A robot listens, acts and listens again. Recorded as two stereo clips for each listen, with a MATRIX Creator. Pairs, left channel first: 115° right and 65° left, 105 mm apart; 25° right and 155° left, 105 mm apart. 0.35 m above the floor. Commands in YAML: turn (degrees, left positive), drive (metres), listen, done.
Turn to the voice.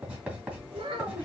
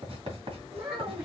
turn: 115
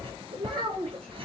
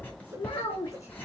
turn: 35
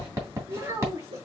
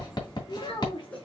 turn: 10
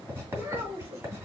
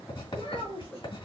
done: "Found it: a child speaking, straight ahead, 2 to 4 m away."